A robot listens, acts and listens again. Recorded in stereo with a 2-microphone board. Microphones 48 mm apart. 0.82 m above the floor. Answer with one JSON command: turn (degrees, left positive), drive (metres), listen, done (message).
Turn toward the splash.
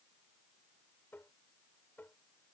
{"listen": true}
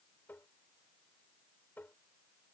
{"listen": true}
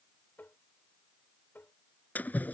{"turn": 40}
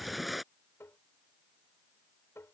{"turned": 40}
{"done": "Facing the splash."}